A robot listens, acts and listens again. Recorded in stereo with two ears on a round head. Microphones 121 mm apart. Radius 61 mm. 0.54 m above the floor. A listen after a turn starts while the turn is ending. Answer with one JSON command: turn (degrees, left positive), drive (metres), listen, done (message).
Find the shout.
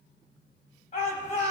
{"turn": 55}
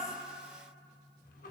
{"listen": true}
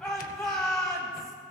{"done": "Found it: a shout, straight ahead, 2 to 4 m away."}